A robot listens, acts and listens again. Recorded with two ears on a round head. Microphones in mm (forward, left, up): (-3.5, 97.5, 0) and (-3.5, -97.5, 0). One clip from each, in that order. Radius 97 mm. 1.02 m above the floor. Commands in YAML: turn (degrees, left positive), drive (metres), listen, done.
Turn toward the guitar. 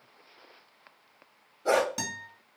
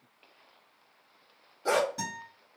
turn: 50
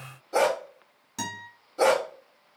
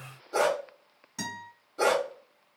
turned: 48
turn: 10
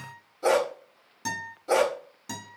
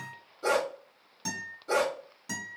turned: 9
done: "Facing the guitar, 1 to 2 m away."